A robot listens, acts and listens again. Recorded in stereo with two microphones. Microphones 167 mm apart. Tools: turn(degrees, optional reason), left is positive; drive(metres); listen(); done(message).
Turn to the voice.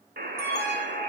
listen()
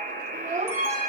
turn(degrees=-45, reason="The child speaking: about 45° right or 135° right.")
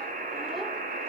listen()
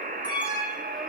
listen()
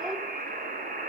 done("I heard a child speaking, but can't make it out now. It was about straight ahead or 90° right.")